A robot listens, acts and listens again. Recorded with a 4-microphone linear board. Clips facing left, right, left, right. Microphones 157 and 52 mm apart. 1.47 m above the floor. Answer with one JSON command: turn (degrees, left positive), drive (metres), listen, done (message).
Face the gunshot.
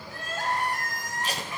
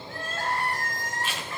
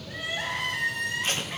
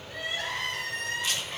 {"listen": true}
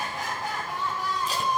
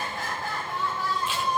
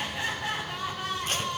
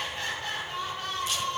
{"listen": true}
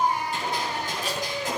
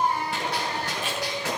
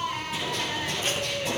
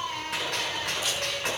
{"turn": -90}
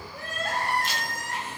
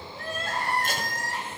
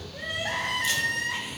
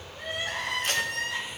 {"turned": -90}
{"done": "Facing where the gunshot came from. I can't hear it now."}